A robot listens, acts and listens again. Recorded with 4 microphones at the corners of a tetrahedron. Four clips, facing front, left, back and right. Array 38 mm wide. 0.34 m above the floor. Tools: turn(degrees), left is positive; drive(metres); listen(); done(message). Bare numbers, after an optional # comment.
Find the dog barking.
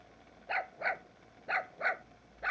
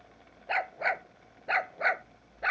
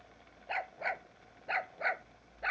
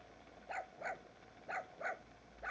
# The dog barking: 100° left.
turn(100)
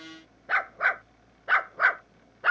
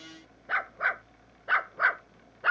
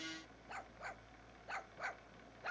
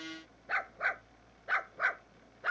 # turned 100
# The dog barking is now 25° left.
turn(25)
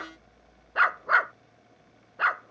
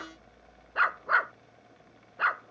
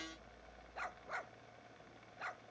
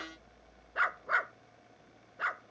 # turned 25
# The dog barking is now 20° left.
turn(20)
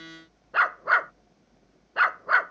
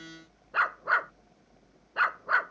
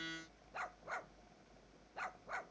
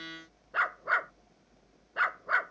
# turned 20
done("Facing the dog barking.")